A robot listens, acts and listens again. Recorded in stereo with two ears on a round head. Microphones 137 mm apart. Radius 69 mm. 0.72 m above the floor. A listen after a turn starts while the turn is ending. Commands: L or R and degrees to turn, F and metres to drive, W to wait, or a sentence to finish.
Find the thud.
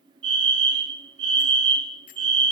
W
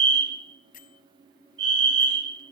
W
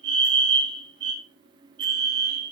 I can't make out a thud, only a fire alarm and a bell.